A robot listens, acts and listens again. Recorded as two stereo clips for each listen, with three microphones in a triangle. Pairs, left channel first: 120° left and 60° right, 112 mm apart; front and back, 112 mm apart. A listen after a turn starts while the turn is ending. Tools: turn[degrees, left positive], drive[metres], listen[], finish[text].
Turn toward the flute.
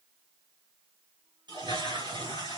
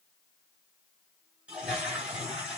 Action: listen[]
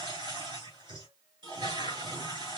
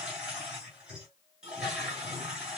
Action: listen[]
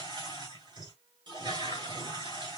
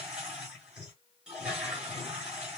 Action: finish[I can't make out a flute, only a toilet flushing.]